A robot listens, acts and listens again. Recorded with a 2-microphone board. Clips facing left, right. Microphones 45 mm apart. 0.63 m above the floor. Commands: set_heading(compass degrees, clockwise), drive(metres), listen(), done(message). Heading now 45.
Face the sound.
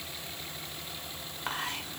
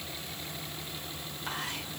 set_heading(10)
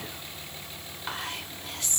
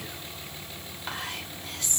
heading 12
done("Found it: whispering, straight ahead, 1 to 2 m away.")